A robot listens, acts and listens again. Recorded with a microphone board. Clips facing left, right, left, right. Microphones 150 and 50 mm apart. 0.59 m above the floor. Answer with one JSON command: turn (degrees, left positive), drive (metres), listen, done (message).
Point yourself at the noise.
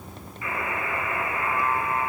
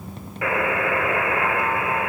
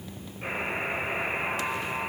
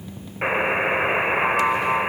{"turn": -90}
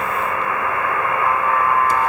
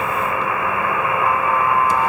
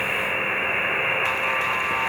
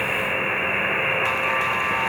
{"done": "Facing the buzzer, 1 to 2 m away."}